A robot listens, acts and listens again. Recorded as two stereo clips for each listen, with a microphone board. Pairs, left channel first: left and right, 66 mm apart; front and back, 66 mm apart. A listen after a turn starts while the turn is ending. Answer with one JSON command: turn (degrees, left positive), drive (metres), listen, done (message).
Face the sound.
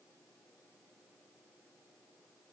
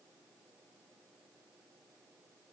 {"listen": true}
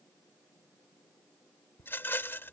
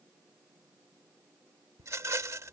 {"turn": 140}
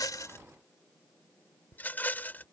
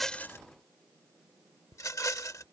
{"turn": 30}
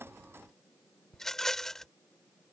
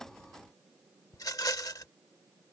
{"done": "Found it: a rattle, straight ahead."}